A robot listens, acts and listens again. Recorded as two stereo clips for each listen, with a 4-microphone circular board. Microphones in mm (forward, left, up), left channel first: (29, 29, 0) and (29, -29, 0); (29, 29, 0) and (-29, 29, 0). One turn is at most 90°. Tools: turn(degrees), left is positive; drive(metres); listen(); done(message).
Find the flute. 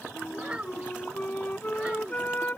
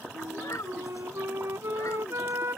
turn(degrees=90)
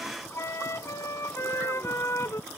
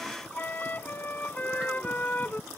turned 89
turn(degrees=60)
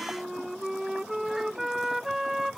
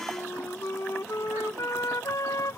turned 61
done("Found it: a flute, straight ahead.")